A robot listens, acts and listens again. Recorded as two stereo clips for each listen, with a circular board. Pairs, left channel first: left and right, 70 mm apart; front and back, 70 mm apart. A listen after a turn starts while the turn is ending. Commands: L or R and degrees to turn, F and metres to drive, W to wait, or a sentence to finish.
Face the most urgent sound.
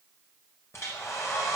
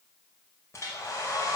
W
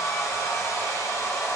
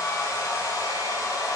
W
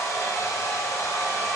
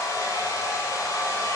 I can't make out anything urgent to turn to.